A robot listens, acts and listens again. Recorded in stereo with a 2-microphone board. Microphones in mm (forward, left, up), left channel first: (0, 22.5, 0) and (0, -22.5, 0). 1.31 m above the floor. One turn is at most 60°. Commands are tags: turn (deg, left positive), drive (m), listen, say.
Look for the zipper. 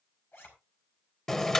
<turn deg="55"/>
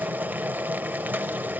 <listen/>
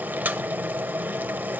<listen/>
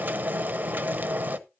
<say>I heard a zipper, but can't make it out now. It was about straight ahead or 70° left.</say>